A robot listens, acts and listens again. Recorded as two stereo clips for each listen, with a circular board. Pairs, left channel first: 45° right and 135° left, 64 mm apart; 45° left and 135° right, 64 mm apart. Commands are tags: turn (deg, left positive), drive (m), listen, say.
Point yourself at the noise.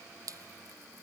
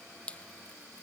<turn deg="115"/>
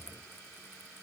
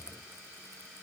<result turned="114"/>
<listen/>
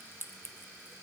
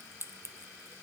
<say>Facing the dripping.</say>